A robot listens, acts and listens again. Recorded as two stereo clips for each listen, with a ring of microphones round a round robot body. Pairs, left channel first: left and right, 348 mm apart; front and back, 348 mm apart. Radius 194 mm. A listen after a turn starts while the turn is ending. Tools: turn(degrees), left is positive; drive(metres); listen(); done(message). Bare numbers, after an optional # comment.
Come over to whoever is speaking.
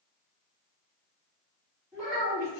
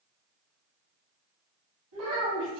# The child speaking: 170° left.
turn(170)
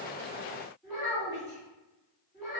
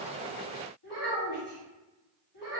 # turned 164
drive(1.0)
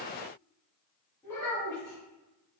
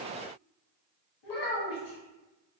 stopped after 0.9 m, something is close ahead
# The child speaking is now 10° left.
turn(10)
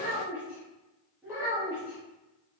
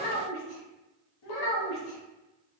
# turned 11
done("I am next to the child speaking.")